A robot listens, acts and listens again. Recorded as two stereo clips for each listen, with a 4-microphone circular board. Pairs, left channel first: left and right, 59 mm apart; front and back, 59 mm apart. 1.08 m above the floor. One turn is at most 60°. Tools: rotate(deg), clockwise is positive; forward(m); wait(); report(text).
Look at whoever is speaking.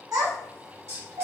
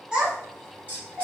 rotate(60)
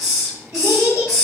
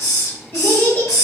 rotate(55)
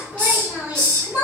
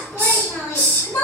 rotate(20)
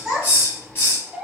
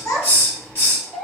report("Found it: a child speaking, straight ahead, 1 to 2 m away.")